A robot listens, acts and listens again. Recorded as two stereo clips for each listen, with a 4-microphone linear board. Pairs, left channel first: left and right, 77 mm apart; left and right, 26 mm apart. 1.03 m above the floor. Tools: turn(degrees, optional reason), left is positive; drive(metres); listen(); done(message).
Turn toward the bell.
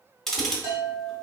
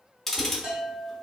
turn(degrees=-35, reason="The bell: about 35° right or 145° right.")
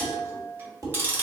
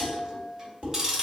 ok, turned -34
turn(degrees=-110, reason="So it is at 110° right.")
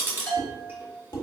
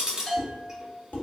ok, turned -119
turn(degrees=10, reason="The bell is now 10° left.")
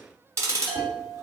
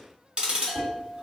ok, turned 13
done("Facing the bell, 1 to 2 m away.")